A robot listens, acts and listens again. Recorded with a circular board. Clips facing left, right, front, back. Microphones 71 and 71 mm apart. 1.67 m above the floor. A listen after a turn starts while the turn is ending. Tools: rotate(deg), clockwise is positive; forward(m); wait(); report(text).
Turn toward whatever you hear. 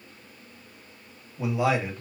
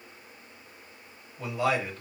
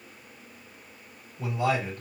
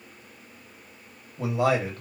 rotate(-170)
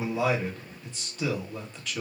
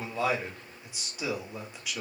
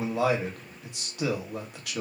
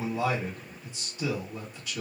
rotate(10)
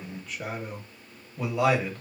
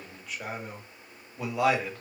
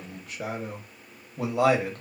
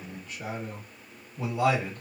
report("Facing the man speaking.")